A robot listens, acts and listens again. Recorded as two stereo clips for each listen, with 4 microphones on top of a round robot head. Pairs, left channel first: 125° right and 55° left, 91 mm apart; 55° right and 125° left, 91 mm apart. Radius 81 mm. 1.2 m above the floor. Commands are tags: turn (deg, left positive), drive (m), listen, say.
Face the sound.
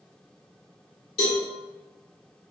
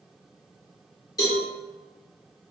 <turn deg="-110"/>
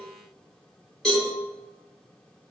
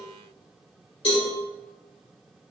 <turn deg="-40"/>
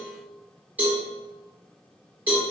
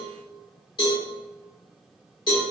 <turn deg="-15"/>
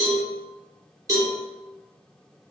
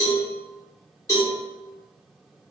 <say>Facing the cowbell.</say>